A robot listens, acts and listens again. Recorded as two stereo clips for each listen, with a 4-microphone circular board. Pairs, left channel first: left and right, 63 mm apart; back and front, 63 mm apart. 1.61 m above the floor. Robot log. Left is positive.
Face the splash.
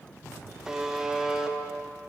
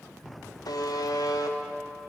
cmd idle
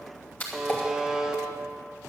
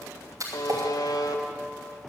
note: The splash: 30° left.
cmd yaw +30
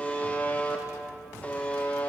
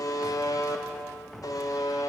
end: I heard a splash from this way, but can't make it out now.